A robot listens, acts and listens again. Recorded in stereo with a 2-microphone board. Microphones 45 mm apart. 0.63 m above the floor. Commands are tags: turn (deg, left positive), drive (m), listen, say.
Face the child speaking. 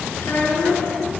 <turn deg="60"/>
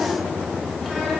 <listen/>
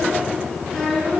<turn deg="10"/>
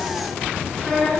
<turn deg="10"/>
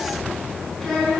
<turn deg="10"/>
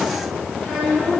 <say>Found it: a child speaking, straight ahead.</say>